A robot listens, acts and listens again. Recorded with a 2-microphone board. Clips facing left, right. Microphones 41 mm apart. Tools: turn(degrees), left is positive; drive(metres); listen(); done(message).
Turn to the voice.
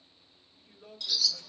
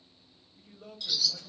turn(degrees=-50)
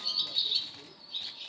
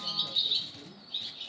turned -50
turn(degrees=-65)
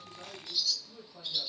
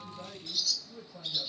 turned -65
turn(degrees=-10)
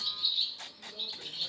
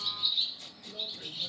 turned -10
listen()
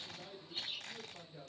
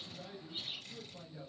done("Facing the man speaking, 1 to 2 m away.")